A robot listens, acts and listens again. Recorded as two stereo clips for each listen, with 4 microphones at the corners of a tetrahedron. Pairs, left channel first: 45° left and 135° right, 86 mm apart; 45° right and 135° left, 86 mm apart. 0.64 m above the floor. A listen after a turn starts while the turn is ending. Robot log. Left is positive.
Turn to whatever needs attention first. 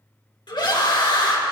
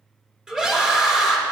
note: The scream: 55° left.
cmd yaw +55
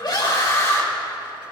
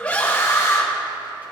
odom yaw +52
end: Facing the scream, 2 to 4 m away.